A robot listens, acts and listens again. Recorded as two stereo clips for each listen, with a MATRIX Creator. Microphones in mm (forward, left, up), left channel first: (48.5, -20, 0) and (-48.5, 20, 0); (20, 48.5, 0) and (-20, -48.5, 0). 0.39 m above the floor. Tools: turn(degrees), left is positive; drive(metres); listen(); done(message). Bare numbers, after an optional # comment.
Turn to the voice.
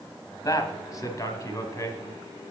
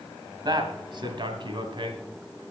# The man speaking: 80° right.
turn(-80)
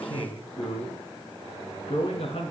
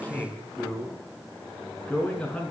# The man speaking is now 10° right.
turn(-10)
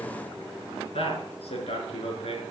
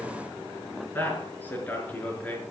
done("Found it: a man speaking, straight ahead.")